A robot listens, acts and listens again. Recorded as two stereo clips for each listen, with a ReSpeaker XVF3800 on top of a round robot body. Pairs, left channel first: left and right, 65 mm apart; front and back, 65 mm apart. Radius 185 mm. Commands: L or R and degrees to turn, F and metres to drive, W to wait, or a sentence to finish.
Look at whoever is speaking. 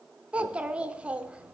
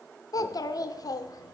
R15
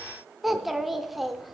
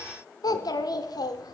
Found it: a child speaking, straight ahead.